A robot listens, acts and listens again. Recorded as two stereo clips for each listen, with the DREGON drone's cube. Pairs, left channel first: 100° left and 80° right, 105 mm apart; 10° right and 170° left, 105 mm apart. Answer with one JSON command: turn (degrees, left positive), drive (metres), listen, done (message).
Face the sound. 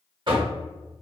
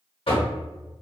{"turn": -40}
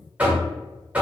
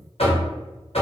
{"done": "Facing the knocking, 1 to 2 m away."}